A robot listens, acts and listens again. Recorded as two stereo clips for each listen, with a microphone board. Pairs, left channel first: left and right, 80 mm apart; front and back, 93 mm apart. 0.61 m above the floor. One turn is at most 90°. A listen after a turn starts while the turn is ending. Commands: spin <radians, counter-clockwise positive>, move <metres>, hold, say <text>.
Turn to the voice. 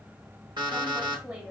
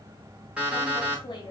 spin -0.35
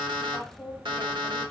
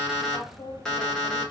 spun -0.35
say Facing the woman speaking, under 1 m away.